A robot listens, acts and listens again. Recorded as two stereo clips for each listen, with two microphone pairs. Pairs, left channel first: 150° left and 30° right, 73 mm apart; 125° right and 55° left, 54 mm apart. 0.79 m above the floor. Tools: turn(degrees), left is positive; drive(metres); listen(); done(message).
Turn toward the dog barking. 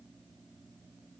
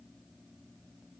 listen()
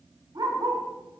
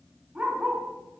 turn(degrees=-10)
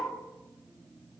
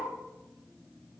done("Facing the dog barking, 2 to 4 m away.")